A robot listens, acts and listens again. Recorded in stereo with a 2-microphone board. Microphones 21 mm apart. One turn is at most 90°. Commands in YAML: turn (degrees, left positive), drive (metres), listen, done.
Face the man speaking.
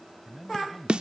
turn: 30
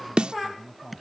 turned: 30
turn: 90
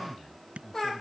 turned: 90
turn: 45
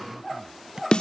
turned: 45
listen: true
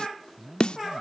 turn: -20
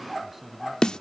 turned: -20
turn: -10
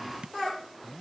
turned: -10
done: "Found it: a man speaking, straight ahead."